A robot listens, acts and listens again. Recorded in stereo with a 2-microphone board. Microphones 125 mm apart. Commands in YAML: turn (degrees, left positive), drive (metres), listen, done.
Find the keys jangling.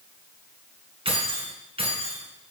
turn: -50
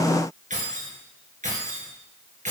turn: -75
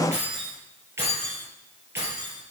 turn: -20
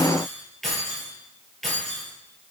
done: "Found it: keys jangling, straight ahead, over 4 m away."